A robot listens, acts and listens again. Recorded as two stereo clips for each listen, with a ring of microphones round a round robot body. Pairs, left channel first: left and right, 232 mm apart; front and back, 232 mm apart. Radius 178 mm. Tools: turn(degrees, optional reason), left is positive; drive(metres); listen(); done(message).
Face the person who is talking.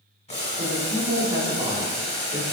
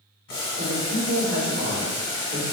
turn(degrees=-150, reason="The man speaking: 150° right.")
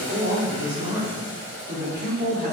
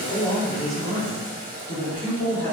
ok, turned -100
turn(degrees=-50, reason="The man speaking is now 50° right.")
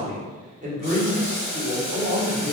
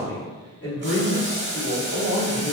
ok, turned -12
turn(degrees=-40, reason="The man speaking is now 40° right.")
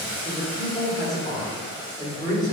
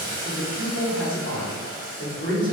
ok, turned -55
turn(degrees=20, reason="The man speaking is now 20° left.")
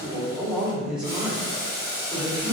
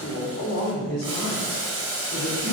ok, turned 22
done("Found it: a man speaking, straight ahead, 1 to 2 m away.")